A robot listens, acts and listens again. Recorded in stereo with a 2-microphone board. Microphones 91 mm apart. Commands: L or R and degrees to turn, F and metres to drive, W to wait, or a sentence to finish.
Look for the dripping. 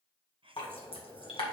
L90
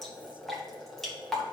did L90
Found it: dripping, straight ahead.